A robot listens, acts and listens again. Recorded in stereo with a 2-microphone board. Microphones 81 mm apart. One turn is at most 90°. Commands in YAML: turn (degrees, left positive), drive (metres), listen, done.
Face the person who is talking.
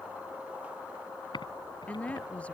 turn: 15
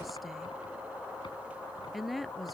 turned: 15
done: "Found it: a woman speaking, straight ahead."